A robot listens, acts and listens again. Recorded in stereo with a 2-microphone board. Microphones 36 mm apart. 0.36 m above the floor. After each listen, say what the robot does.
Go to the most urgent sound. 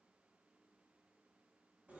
Keep listening.
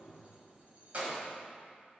Keep listening.
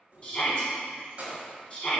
Turn 25° left.
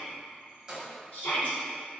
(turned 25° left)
Turn 130° left.
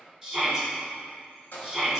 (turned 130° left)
Drive 1.0 m forward.
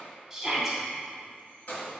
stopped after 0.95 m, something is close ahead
Arrived at the shout, straight ahead.